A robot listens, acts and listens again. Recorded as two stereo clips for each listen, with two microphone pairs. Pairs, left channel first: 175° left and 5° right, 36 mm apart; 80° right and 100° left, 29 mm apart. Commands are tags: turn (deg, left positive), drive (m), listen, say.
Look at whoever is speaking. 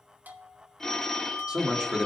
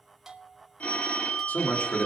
<turn deg="-65"/>
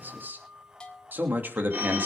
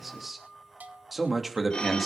<turn deg="15"/>
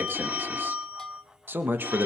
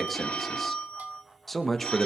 <say>Found it: a man speaking, straight ahead.</say>